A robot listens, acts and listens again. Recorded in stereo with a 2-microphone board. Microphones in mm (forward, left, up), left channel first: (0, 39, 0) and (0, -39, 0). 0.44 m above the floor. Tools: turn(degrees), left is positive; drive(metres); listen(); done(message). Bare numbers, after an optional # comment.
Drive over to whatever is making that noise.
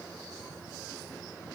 listen()
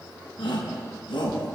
# The shout: about 75° left or 105° left.
turn(75)
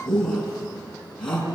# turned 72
# So it is at 10° left.
turn(10)
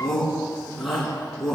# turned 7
drive(1.0)
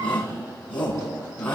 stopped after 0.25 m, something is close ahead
# The shout is now 15° left.
turn(15)
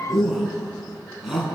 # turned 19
done("Something is in my way. I am facing the shout but have not reached it.")